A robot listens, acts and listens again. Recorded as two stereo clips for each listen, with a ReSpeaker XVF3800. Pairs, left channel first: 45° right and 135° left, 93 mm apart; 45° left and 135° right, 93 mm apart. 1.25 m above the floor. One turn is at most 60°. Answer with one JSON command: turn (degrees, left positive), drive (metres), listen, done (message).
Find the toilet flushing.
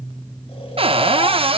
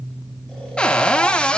{"listen": true}
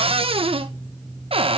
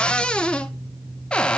{"listen": true}
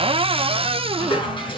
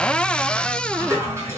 {"turn": -60}
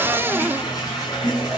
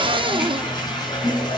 {"done": "Found it: a toilet flushing, straight ahead, over 4 m away."}